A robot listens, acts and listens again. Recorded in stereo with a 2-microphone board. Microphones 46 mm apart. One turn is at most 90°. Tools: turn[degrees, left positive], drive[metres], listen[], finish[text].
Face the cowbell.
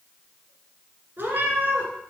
Action: listen[]
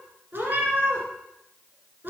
Action: listen[]
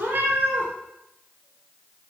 Action: finish[I can't make out a cowbell to turn to.]